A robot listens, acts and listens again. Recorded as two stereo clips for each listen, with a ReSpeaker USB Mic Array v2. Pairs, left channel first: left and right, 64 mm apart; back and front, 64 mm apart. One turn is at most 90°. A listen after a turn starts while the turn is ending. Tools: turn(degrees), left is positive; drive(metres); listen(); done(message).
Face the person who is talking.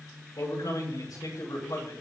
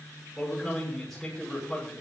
turn(degrees=90)
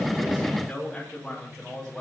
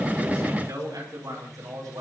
turn(degrees=10)
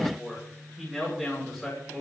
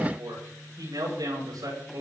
done("Facing the man speaking, over 4 m away.")